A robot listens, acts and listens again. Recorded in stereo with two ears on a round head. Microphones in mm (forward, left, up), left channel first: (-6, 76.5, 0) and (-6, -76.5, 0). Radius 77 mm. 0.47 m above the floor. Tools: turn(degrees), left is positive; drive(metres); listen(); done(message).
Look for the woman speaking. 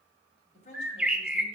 turn(degrees=45)
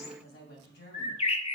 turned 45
turn(degrees=115)
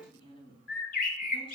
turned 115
turn(degrees=30)
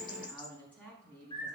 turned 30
turn(degrees=10)
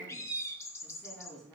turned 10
done("Found it: a woman speaking, straight ahead, over 4 m away.")